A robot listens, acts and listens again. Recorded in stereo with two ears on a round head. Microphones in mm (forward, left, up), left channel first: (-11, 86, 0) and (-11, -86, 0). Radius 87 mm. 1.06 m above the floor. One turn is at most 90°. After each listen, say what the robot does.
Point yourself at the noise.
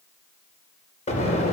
Turn 35° left.
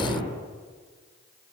Found it: an explosion, straight ahead.